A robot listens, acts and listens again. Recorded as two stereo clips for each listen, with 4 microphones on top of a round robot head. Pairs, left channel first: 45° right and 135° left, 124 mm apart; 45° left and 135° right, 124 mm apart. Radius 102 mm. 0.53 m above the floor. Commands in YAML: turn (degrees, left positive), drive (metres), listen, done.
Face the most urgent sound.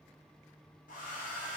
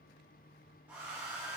listen: true
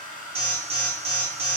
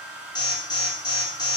turn: 100
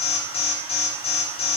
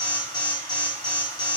turn: -10
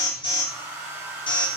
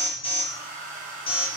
done: "Found it: an alarm, straight ahead, 1 to 2 m away."